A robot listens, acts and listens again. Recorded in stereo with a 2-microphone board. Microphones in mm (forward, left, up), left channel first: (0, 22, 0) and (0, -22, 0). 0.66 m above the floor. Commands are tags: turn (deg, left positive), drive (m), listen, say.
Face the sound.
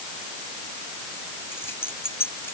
<turn deg="60"/>
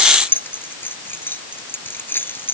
<turn deg="55"/>
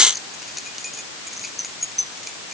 <say>Facing the keys jangling.</say>